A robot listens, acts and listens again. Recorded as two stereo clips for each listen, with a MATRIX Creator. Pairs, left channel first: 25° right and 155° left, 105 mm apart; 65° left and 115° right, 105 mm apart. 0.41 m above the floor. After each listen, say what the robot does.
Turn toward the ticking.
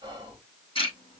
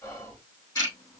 Turn 15° left.
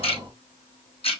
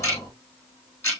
Facing the ticking.